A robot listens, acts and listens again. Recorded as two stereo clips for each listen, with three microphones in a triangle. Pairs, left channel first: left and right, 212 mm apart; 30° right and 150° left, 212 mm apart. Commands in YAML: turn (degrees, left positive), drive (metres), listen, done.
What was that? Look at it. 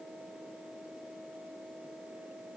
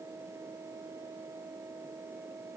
listen: true
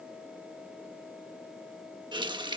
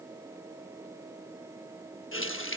turn: -20
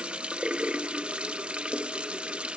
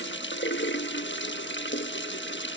done: "Found it: a running tap, straight ahead."